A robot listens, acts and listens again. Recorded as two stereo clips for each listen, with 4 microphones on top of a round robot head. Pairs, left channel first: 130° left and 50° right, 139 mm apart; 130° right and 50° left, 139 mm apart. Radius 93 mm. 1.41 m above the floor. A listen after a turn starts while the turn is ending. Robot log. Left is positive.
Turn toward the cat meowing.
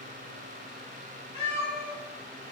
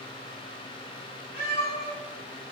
note: The cat meowing: 175° right.
cmd yaw -175
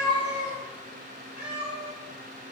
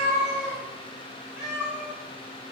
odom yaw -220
note: The cat meowing is now 30° right.
cmd yaw -30
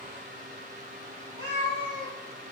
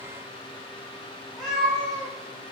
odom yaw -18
note: The cat meowing is now 35° right.
cmd yaw -35
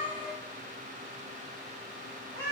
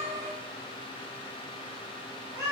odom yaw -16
note: The cat meowing is now 20° right.
cmd yaw -20
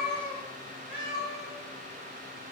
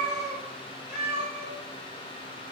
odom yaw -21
end: Facing the cat meowing.